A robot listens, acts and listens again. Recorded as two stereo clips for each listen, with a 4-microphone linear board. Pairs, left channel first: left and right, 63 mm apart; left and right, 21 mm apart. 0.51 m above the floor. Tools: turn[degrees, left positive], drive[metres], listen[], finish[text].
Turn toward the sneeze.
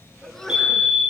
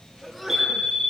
Action: turn[30]
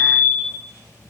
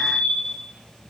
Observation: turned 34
Action: listen[]
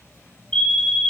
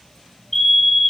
Action: finish[I heard a sneeze, but can't make it out now. It was about 25° right or 140° left.]